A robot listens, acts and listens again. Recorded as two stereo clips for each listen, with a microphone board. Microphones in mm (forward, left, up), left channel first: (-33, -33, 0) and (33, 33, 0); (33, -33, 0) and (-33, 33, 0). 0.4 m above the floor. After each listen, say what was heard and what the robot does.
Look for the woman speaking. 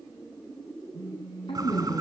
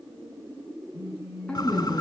The woman speaking: 120° right. Turn 120° right.
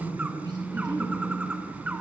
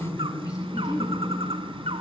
Facing the woman speaking.